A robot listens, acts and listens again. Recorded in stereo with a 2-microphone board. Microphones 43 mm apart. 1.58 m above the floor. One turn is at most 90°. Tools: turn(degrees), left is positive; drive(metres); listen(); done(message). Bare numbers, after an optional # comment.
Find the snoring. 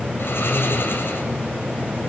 # The snoring: about 65° left or 115° left.
turn(65)
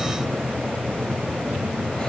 listen()
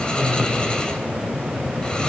# So it is at 25° left.
turn(25)
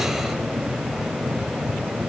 listen()
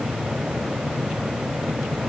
listen()
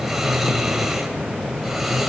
# The snoring is now 10° right.
turn(-10)
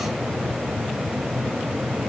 listen()
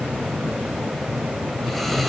done("Facing the snoring, 2 to 4 m away.")